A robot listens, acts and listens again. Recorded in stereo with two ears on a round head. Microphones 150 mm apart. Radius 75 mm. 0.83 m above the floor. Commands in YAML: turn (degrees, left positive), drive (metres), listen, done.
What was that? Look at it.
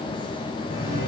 turn: 60
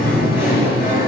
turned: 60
turn: 70
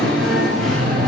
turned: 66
done: "Facing the singing, over 4 m away."